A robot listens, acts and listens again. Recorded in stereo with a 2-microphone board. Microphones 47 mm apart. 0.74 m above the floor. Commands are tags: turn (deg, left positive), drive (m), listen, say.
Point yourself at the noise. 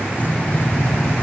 <turn deg="30"/>
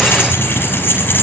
<turn deg="130"/>
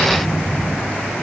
<turn deg="30"/>
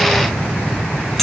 <say>Facing the keys jangling, over 4 m away.</say>